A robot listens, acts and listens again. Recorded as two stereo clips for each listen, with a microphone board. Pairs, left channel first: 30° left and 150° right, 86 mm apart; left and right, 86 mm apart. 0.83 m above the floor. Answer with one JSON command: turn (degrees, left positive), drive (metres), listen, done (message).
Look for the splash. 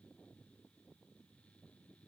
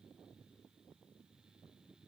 {"listen": true}
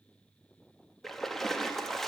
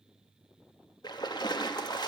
{"turn": 115}
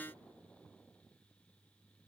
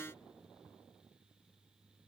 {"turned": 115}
{"done": "Facing where the splash came from. I can't hear it now."}